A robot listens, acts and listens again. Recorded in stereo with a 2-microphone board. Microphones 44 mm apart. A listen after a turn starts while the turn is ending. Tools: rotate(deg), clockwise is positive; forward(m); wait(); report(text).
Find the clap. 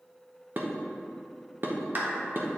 rotate(45)
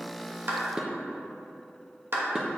rotate(85)
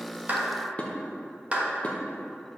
rotate(35)
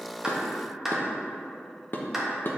rotate(10)
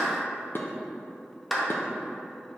report("Found it: a clap, straight ahead, 1 to 2 m away.")